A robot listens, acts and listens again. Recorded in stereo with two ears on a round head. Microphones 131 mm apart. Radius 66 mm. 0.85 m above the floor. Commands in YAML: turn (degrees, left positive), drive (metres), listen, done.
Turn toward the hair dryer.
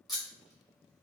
listen: true
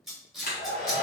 turn: 60
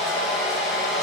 done: "Facing the hair dryer, 1 to 2 m away."